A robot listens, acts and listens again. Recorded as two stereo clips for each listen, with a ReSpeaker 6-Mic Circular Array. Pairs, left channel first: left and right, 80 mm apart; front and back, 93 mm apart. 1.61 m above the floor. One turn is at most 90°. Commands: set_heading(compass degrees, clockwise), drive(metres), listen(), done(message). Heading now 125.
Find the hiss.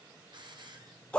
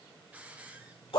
set_heading(215)
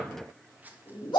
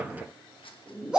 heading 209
set_heading(229)
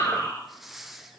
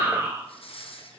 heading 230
done("Found it: a hiss, straight ahead, 1 to 2 m away.")